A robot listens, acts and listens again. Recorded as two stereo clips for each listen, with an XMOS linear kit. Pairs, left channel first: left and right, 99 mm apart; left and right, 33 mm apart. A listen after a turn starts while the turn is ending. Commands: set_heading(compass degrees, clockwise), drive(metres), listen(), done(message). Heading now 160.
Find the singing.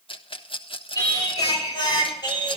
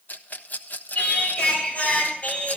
set_heading(120)
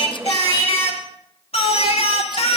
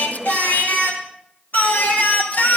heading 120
set_heading(15)
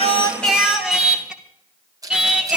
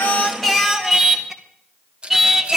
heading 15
set_heading(25)
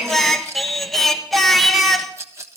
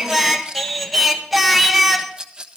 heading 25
done("Found it: singing, straight ahead.")